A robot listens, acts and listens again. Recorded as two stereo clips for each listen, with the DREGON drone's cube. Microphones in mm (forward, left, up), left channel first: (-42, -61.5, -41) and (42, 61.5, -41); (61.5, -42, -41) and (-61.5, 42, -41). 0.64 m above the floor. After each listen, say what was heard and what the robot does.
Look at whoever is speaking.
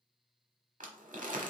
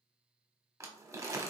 Keep listening.
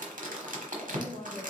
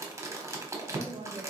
The woman speaking: 165° right. Turn 165° right.
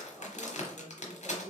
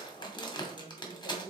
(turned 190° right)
The woman speaking is now 25° right. Turn 25° right.
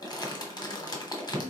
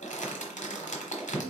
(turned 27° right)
Keep listening.
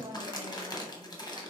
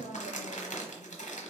Facing the woman speaking, 1 to 2 m away.